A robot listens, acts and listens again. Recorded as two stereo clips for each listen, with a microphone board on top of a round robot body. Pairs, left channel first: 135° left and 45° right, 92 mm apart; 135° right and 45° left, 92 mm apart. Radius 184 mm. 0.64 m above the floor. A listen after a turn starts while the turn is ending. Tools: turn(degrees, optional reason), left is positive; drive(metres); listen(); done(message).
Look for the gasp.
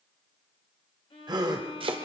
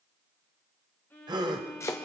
done("Found it: a gasp, straight ahead.")